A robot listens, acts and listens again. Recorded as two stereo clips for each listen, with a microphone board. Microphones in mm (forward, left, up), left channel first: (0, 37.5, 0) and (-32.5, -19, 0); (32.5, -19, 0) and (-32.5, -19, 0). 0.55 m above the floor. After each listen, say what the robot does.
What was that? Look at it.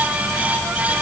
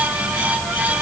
Keep listening.
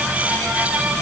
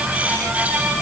Keep listening.
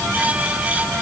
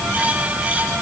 I can't make out anything to turn to.